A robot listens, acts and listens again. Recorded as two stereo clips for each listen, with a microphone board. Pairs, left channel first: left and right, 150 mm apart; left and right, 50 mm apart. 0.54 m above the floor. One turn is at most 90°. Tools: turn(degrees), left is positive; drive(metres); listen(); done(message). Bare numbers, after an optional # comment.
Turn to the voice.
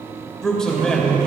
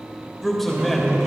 turn(30)
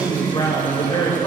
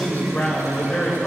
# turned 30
# So it is at 145° left.
turn(90)
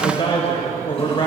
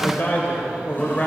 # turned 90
# The man speaking is now 40° left.
turn(40)
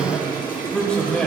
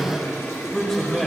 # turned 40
# The man speaking is now 10° left.
turn(10)
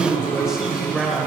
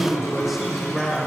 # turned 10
done("Found it: a man speaking, straight ahead.")